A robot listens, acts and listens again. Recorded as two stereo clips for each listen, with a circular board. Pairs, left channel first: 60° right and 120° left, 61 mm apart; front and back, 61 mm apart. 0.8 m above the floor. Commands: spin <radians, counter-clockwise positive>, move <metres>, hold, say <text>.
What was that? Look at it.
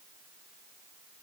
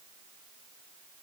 hold
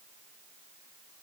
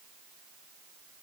hold
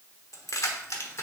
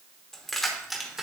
spin -1.75
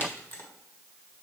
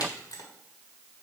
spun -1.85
spin -0.17
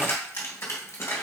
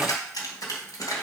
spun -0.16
spin -0.35
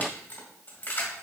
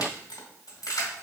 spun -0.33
say Found it: keys jangling, straight ahead, 2 to 4 m away.